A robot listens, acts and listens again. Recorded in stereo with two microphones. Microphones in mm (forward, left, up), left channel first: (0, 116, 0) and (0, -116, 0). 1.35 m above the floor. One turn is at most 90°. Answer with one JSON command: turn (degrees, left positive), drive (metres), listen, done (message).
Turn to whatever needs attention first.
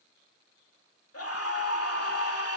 {"turn": 90}
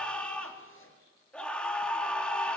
{"done": "Found it: a scream, straight ahead, 2 to 4 m away."}